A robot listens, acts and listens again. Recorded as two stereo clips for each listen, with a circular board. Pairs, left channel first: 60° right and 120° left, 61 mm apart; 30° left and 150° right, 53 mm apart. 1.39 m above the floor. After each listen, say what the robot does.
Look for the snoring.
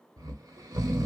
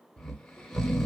Turn 115° left.
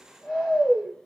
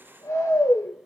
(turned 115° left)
Turn 35° left.
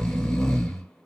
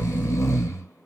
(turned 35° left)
Turn 20° left.
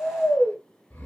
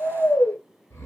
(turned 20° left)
Found it: snoring, straight ahead.